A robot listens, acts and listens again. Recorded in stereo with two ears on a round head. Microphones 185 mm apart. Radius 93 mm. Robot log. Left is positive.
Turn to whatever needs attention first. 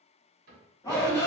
note: The shout: about 20° left or 160° left.
cmd yaw +20
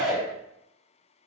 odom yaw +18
end: Found it: a shout, straight ahead.